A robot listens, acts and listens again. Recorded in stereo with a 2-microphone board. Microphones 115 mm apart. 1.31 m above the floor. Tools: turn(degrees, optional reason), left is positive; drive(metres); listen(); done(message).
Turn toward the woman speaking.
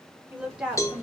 turn(degrees=-30)
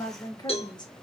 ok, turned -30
turn(degrees=40, reason="So it is at 40° left.")
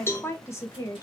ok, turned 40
turn(degrees=30, reason="The woman speaking is now 30° left.")
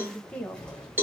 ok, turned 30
turn(degrees=15, reason="The woman speaking is now 15° left.")
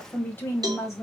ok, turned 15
turn(degrees=25, reason="The woman speaking is now 25° left.")
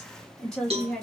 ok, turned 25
done("Facing the woman speaking.")